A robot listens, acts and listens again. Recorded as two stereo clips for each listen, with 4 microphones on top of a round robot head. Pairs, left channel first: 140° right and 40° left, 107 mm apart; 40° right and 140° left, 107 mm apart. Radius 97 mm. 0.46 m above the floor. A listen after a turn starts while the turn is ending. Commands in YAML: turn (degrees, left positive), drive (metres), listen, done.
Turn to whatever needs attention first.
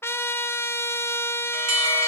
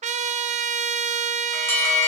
turn: 25
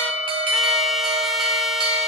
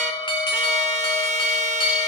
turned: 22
done: "Found it: an alarm, straight ahead, 2 to 4 m away."